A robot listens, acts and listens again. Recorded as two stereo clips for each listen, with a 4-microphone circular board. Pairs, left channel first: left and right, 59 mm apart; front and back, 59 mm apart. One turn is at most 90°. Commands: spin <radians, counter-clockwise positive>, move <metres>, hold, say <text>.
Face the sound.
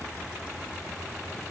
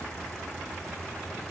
hold
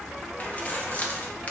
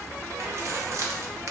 spin 1.57
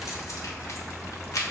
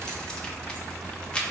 spin 1.22
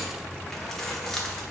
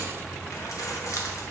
say Facing the keys jangling.